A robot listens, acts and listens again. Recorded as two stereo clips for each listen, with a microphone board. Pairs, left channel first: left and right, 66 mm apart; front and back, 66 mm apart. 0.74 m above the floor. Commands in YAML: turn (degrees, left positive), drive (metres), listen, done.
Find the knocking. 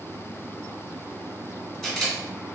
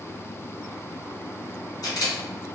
listen: true
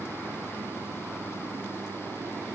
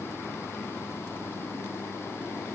listen: true
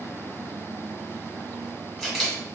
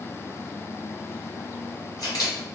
done: "I can't make out knocking to turn to."